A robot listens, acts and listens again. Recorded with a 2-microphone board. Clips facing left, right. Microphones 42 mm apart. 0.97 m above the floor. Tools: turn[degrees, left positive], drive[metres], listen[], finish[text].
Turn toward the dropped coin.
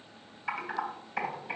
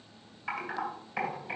Action: listen[]
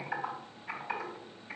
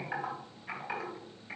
Action: listen[]
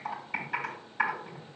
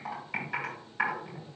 Action: finish[I can't make out a dropped coin, only typing on a keyboard.]